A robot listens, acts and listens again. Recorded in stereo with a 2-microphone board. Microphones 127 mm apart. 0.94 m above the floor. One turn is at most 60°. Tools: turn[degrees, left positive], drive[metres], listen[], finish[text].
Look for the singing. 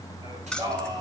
Thought: The singing: about 35° right or 145° right.
Action: turn[-35]
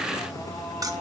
Action: listen[]
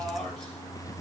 Action: listen[]
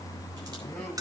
Action: finish[I heard singing, but can't make it out now. It was about straight ahead or 110° right.]